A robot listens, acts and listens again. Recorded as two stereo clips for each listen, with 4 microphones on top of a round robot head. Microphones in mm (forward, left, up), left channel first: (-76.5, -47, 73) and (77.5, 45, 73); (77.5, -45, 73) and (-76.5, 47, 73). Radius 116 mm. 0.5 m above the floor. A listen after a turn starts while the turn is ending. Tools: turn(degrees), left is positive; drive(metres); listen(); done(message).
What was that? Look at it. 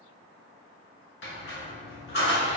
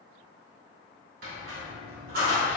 turn(degrees=-175)
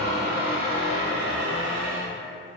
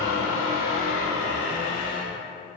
turn(degrees=15)
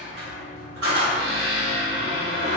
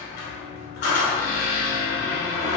done("Facing the squeak.")